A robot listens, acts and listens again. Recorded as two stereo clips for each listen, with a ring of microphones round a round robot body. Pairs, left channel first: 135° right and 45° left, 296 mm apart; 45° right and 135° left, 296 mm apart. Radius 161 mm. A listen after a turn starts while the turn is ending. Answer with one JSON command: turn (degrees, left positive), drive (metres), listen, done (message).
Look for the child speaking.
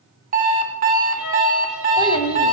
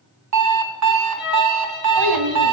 {"turn": 150}
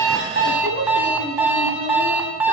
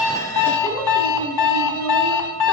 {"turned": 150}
{"turn": -15}
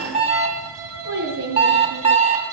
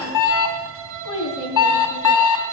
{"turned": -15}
{"turn": -10}
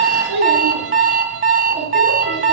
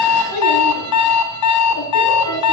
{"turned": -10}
{"turn": -10}
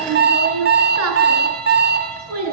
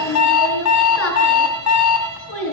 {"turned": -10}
{"done": "Facing the child speaking, over 4 m away."}